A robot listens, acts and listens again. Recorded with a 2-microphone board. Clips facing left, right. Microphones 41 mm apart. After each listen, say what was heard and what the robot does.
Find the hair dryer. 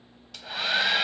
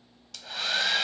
Turn 30° left.
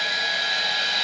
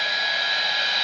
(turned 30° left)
So it is at 10° right. Turn 10° right.
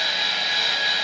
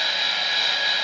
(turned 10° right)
Facing the hair dryer, under 1 m away.